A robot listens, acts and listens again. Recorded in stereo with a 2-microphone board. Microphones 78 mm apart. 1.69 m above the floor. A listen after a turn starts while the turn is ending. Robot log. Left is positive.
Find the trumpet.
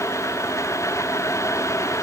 cmd idle
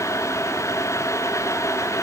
cmd idle
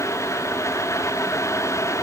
end: I can't make out a trumpet.